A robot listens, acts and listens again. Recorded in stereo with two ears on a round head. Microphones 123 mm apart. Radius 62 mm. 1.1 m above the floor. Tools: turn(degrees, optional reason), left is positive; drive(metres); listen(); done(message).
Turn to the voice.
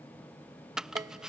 listen()
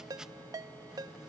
listen()
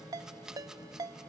done("I can't make out anyone speaking, only a ringtone and chopping.")